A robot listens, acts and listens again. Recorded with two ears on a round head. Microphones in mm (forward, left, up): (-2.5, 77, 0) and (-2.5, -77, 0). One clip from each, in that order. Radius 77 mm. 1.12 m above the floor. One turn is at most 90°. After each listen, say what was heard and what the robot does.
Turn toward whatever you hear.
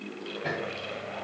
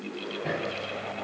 The hammering: about 55° left or 125° left. Turn 55° left.
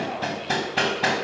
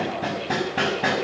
So it is at 70° left. Turn 70° left.
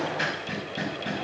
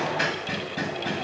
The hammering is now 10° right. Turn 10° right.
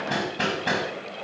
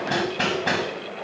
Facing the hammering.